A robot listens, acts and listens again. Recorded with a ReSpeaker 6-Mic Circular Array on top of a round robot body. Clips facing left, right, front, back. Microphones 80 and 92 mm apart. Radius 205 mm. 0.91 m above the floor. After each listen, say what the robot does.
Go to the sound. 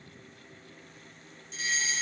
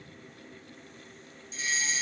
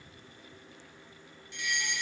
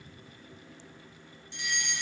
Turn 125° left.
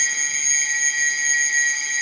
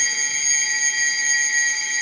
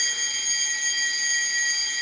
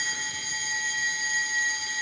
Drive 1.0 m forward.
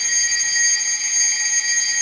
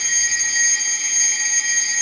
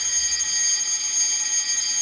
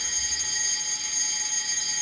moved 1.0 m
Drive 1.0 m forward.
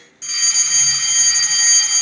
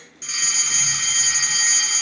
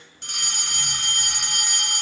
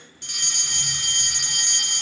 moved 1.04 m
Drive 1.0 m forward.
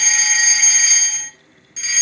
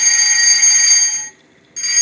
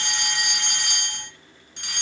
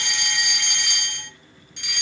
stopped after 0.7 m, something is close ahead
Arrived at the fire alarm, straight ahead.